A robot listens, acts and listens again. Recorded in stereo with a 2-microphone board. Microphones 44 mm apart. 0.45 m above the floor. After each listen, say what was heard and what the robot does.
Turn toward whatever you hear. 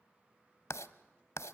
Turn 90° left.
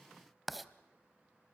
Found it: writing, straight ahead.